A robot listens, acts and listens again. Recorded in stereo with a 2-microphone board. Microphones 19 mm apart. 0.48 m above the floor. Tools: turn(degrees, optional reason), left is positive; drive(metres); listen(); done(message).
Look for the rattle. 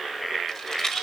turn(degrees=30, reason="The rattle: about 30° left or 150° left.")
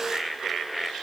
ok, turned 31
listen()
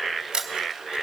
listen()
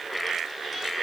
done("I heard a rattle, but can't make it out now. It was about straight ahead or 120° left.")